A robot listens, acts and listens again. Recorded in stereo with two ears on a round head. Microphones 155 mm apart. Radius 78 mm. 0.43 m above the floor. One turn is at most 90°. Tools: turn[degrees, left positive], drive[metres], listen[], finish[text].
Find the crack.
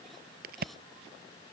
Thought: The crack: about 55° right or 125° right.
Action: turn[-55]
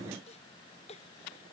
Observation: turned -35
Action: listen[]
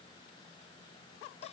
Action: finish[I heard a crack, but can't make it out now. It was about 20° right or 90° right.]